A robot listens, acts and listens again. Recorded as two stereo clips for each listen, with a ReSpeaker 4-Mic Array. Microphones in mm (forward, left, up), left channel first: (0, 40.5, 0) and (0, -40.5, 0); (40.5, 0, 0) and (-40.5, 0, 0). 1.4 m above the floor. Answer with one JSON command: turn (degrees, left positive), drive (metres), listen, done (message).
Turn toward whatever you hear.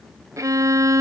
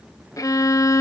{"turn": -45}
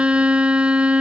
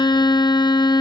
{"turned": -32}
{"turn": -15}
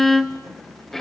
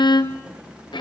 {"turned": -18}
{"done": "Facing the violin, under 1 m away."}